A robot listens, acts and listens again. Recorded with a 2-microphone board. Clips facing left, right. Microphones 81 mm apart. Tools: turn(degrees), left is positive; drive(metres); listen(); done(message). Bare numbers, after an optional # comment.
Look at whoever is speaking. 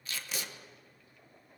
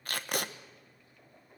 listen()
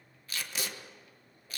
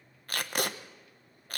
listen()
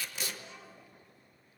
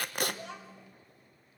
turn(-90)
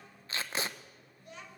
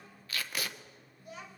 done("Found it: a child speaking, straight ahead.")